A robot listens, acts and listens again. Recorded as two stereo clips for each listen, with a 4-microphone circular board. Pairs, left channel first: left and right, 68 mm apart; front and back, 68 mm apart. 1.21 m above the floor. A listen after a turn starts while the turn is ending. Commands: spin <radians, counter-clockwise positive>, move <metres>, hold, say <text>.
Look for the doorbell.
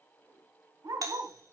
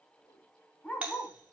spin -1.92
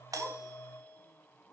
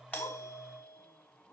hold
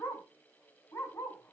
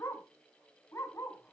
hold
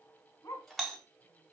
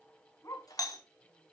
say Found it: a doorbell, straight ahead, 2 to 4 m away.